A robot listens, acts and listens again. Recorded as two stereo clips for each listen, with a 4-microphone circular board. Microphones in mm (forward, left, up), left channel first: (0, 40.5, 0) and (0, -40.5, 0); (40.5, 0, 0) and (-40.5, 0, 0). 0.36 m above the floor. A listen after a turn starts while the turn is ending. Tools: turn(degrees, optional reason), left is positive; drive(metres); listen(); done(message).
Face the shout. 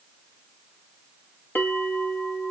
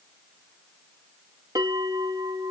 listen()
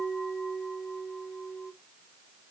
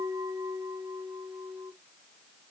listen()
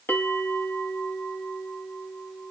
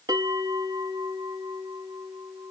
done("I can't make out a shout to turn to.")